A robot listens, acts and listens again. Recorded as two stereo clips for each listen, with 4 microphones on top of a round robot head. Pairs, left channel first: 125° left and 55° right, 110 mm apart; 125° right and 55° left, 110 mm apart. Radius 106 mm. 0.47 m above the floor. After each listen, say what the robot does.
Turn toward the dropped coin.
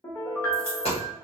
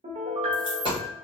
Turn 95° left.
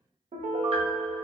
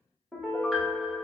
I heard a dropped coin from this way, but can't make it out now.